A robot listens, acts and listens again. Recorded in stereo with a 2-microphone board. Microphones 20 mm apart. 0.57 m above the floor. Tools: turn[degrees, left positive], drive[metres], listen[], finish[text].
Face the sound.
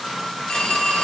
Thought: The phone ringing: about 65° left or 115° left.
Action: turn[65]
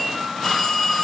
Thought: So it is at 45° left.
Action: turn[45]
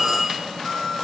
Action: finish[Facing the phone ringing, 1 to 2 m away.]